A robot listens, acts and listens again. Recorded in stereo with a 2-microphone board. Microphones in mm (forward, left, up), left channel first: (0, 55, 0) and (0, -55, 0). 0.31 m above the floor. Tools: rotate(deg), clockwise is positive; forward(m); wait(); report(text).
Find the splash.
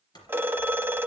rotate(-40)
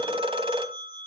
wait()
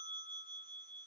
report("I heard a splash, but can't make it out now. It was about straight ahead or 100° left.")